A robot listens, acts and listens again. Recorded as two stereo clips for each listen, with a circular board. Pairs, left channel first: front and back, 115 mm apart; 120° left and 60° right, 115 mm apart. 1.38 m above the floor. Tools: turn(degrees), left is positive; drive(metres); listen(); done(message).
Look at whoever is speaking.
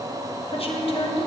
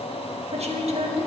turn(degrees=-35)
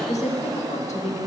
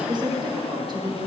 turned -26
turn(degrees=-10)
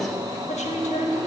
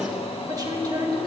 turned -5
done("Facing the woman speaking.")